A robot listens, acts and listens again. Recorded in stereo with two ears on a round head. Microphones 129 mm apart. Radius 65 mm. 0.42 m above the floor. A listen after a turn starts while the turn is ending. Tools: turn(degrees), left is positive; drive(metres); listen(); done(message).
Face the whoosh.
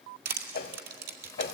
turn(degrees=90)
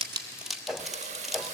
done("Facing the whoosh.")